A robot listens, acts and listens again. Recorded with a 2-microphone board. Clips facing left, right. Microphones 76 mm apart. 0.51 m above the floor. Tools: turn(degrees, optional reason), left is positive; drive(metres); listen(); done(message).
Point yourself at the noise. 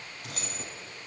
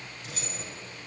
turn(degrees=65, reason="The keys jangling: about 65° left or 115° left.")
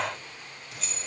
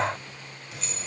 done("Found it: keys jangling, straight ahead, 2 to 4 m away.")